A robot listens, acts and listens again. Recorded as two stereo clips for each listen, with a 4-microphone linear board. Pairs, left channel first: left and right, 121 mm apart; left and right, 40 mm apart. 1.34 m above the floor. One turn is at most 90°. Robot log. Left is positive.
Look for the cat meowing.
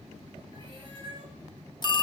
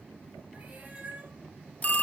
note: The cat meowing: about 45° right or 135° right.
cmd yaw -45
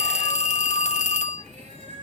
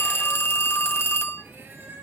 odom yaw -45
note: So it is at 100° right.
cmd yaw -90
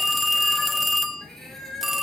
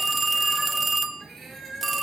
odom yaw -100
end: Found it: a cat meowing, straight ahead, over 4 m away.